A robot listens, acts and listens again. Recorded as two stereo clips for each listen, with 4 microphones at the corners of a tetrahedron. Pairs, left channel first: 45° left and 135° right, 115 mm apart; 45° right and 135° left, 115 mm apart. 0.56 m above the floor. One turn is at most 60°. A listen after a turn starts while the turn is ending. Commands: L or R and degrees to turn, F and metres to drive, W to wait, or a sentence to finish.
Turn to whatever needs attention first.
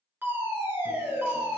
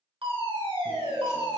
L60
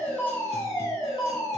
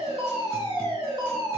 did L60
L60
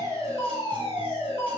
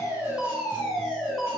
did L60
L45
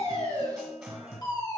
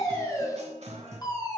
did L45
Found it: a fire alarm, straight ahead.